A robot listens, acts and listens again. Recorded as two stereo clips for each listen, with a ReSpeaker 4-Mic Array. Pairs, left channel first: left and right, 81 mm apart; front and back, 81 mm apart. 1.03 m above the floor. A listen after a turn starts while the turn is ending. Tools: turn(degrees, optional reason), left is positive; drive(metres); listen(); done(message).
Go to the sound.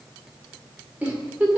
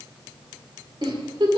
turn(degrees=-165, reason="The giggle: 165° right.")
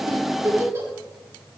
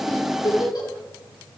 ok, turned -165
turn(degrees=-35, reason="The giggle is now 35° right.")
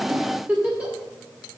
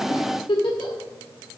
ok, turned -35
turn(degrees=-15, reason="The giggle is now 15° right.")
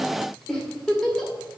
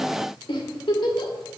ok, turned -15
drive(metres=1.0)
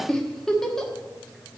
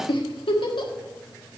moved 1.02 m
drive(metres=1.0)
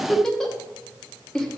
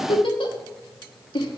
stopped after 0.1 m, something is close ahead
done("I am next to the giggle.")